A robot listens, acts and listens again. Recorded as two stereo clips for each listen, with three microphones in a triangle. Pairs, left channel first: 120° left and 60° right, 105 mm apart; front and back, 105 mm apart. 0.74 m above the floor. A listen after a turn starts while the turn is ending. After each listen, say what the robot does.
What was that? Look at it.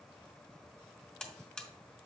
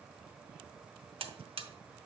Turn 160° right.
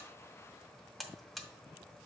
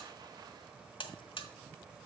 Turn 30° left.
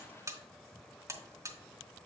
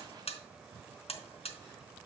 Facing the buzzer, under 1 m away.